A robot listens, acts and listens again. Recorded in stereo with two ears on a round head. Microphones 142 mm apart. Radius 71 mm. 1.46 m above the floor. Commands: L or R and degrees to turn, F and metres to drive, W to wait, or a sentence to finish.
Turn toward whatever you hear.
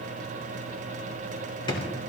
L30
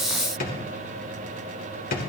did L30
L120
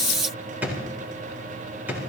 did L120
R10
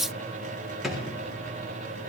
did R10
Found it: a drawer, straight ahead.